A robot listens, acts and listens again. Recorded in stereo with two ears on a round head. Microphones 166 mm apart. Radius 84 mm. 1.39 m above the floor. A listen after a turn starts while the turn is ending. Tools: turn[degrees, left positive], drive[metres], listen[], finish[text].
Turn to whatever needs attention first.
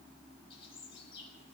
Action: listen[]
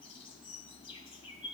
Action: listen[]
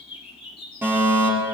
Action: turn[-30]
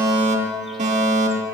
Thought: So it is at 135° right.
Action: turn[-135]
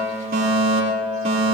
Thought: The fire alarm is now 35° right.
Action: turn[-35]
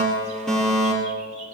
Action: finish[Found it: a fire alarm, straight ahead.]